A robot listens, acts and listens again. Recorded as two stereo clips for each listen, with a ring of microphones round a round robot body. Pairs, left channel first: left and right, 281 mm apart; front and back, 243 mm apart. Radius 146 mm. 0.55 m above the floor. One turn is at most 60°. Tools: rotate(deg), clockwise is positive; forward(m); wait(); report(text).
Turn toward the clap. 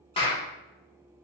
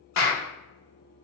rotate(-20)
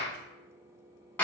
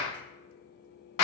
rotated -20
report("Found it: a clap, straight ahead, under 1 m away.")